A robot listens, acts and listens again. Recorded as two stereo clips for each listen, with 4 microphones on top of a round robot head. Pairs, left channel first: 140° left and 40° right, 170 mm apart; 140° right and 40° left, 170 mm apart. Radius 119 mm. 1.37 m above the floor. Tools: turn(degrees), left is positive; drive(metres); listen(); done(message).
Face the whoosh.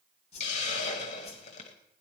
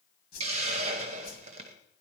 turn(degrees=-165)
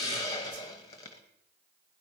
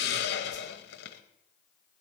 listen()
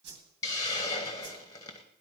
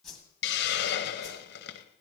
turn(degrees=-50)
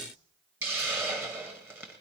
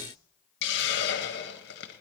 listen()
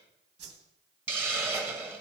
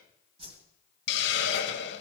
turn(degrees=-15)
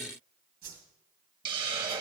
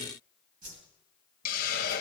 done("Found it: a whoosh, straight ahead.")